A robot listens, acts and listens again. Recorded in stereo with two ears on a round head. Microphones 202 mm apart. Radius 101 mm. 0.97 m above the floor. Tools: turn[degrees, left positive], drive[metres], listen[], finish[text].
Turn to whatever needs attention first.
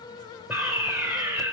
Action: turn[-30]
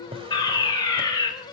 Thought: So it is at 20° left.
Action: turn[20]
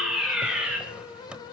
Action: finish[Found it: a fire alarm, straight ahead, over 4 m away.]